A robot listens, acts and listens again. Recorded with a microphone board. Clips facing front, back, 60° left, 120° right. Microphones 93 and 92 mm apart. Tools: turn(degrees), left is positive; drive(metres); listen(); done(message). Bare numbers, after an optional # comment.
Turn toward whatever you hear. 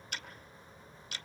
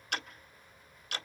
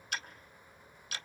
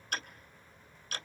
# The ticking: 165° right.
turn(-165)
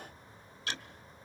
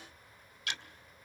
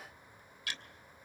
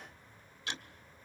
# The ticking is now 55° right.
turn(-55)
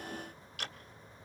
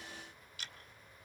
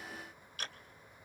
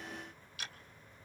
# The ticking is now 15° left.
turn(15)
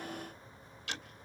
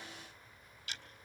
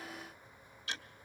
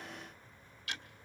done("Found it: ticking, straight ahead, 1 to 2 m away.")